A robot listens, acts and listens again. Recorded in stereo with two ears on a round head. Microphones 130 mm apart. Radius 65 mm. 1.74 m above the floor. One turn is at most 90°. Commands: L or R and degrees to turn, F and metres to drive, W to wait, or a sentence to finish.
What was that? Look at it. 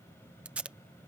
R30
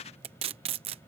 R90
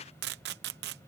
R85
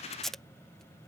Facing the tape being pulled.